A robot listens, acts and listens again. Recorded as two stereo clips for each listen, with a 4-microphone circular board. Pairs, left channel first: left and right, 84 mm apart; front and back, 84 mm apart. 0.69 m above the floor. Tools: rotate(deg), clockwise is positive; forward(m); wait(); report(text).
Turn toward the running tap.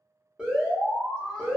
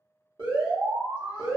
wait()
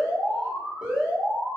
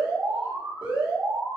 wait()
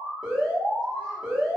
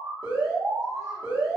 report("I can't make out a running tap, only an alarm.")